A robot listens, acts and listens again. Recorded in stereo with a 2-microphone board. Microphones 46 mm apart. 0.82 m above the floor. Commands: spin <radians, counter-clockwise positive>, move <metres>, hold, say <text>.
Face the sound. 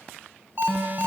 spin -0.79
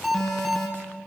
say Facing the alarm.